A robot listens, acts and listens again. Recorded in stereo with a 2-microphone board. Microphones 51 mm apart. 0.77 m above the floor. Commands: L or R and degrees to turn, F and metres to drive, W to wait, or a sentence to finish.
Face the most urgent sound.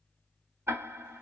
W
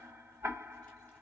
W
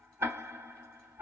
I can't make out anything urgent to turn to.